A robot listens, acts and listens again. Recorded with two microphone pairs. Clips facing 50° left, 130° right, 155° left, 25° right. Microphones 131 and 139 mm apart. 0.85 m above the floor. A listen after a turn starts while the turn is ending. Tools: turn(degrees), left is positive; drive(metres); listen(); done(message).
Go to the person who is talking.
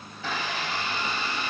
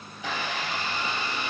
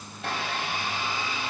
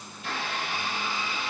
listen()
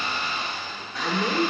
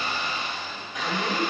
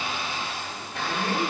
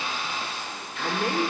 turn(degrees=-25)
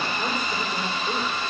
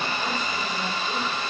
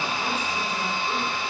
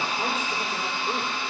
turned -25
listen()
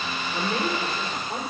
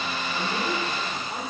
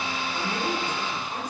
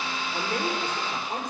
drive(metres=1.0)
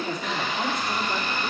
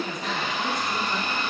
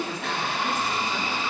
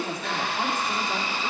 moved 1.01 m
drive(metres=1.0)
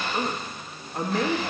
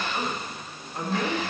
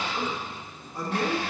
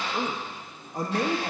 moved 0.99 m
drive(metres=1.0)
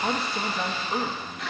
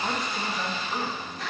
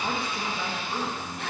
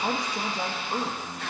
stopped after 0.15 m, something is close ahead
done("Arrived at the man speaking, straight ahead.")